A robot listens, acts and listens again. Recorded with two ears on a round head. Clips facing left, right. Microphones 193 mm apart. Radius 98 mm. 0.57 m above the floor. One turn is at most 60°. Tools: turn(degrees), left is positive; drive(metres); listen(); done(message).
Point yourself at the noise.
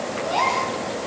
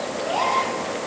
turn(degrees=40)
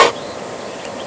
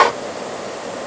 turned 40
listen()
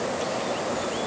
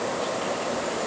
done("I heard a gasp, but can't make it out now. It was about straight ahead or 100° left.")